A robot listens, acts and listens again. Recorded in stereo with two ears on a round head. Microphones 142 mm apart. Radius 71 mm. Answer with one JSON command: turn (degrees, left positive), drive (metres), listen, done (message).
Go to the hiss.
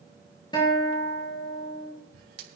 {"turn": -65}
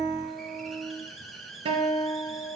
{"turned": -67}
{"drive": 1.0}
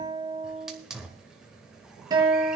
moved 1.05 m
{"drive": 1.0}
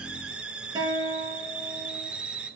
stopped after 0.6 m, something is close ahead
{"done": "Arrived at the hiss, straight ahead."}